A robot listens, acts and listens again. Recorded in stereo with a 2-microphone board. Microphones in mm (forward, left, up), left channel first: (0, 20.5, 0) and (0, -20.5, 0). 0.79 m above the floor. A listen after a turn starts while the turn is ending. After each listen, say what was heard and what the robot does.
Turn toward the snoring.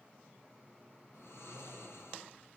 The snoring: about 70° left or 110° left. Turn 70° left.
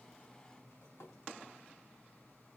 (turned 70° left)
Keep listening.
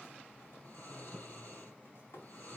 So it is at 40° left. Turn 40° left.
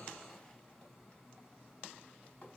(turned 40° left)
Keep listening.
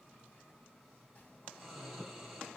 Found it: snoring, straight ahead.